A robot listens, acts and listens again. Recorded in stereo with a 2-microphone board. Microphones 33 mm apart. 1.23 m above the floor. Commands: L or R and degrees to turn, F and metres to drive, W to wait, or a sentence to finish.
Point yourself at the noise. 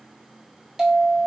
R20
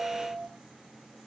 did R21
R140
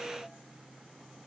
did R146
W
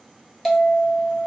Facing the bell, 1 to 2 m away.